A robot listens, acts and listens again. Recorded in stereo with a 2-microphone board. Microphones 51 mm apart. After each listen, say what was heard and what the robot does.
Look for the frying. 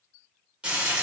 The frying: about 20° right or 160° right. Turn 20° right.
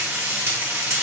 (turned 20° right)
So it is at 135° right. Turn 135° right.
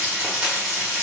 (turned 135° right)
The frying is now 25° right. Turn 25° right.
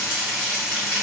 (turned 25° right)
The frying is now 10° right. Turn 10° right.
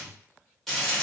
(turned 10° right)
Facing the frying.